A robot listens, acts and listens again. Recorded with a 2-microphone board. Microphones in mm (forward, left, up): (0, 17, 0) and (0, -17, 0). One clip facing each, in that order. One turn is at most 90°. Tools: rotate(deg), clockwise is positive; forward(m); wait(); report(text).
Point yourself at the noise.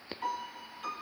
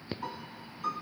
rotate(-90)
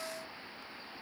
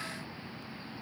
wait()
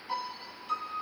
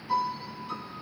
report("Facing the piano, 2 to 4 m away.")